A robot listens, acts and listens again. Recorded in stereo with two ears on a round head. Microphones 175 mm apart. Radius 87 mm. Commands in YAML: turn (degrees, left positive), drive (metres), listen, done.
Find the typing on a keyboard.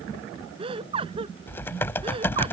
turn: 30
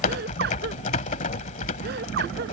turn: 140
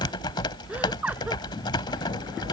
turn: 25
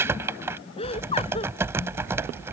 turn: -15
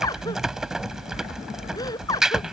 done: "Facing the typing on a keyboard."